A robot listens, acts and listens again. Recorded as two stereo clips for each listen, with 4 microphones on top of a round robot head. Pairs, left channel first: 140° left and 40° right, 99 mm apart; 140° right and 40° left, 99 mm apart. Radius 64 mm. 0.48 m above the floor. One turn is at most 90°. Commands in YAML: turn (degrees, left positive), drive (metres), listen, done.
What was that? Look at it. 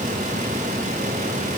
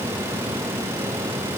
listen: true
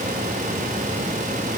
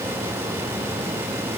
listen: true
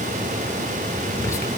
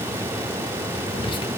turn: -90
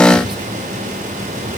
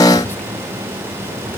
turn: -75
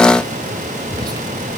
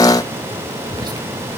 done: "Found it: whispering, straight ahead."